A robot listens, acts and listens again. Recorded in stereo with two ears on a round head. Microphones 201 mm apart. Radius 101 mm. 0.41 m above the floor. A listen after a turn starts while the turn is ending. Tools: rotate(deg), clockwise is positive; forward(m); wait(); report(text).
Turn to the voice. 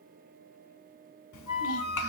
rotate(-65)
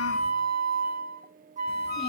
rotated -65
wait()
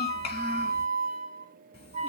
rotate(-30)
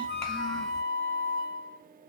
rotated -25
wait()
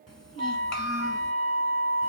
report("Facing the child speaking, 1 to 2 m away.")